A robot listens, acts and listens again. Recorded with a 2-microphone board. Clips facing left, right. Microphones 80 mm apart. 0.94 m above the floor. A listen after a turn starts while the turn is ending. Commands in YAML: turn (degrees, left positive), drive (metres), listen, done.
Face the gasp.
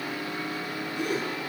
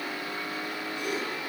turn: 35
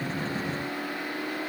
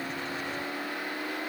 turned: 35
listen: true
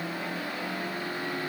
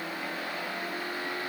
done: "I heard a gasp, but can't make it out now. It was about straight ahead or 110° left."